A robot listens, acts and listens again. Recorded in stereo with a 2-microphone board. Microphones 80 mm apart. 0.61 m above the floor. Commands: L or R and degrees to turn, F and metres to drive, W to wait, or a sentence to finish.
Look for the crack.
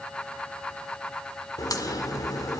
L55
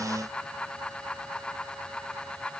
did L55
W
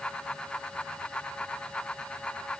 I heard a crack, but can't make it out now. It was about straight ahead or 70° left.